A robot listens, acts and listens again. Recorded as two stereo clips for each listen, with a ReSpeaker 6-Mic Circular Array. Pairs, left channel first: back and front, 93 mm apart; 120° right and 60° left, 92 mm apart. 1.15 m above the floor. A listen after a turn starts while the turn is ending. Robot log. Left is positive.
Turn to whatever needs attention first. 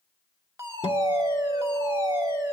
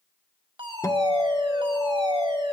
note: The fire alarm: 55° left.
cmd yaw +55
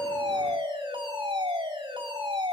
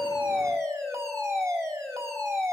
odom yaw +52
end: Facing the fire alarm.